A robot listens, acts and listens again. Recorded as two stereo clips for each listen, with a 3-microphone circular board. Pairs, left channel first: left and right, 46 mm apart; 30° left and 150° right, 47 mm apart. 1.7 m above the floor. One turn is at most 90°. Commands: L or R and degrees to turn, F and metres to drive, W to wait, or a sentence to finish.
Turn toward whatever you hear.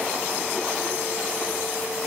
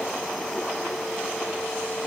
W
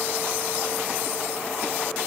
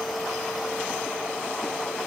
W
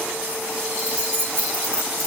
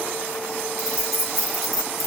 R60
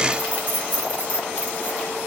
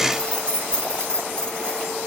R40
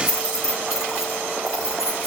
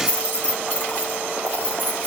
R10
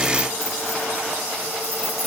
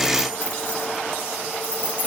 Found it: keys jangling, straight ahead.